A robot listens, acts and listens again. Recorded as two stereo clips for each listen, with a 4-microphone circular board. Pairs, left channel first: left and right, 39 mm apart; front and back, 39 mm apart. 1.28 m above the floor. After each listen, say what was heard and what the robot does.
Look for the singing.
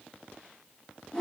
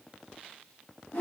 Keep listening.
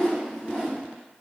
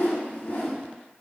Keep listening.
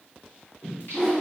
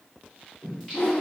The singing: 85° left. Turn 85° left.
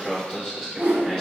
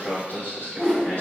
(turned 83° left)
The singing is now 10° left. Turn 10° left.
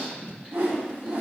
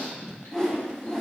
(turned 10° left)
Facing the singing, 2 to 4 m away.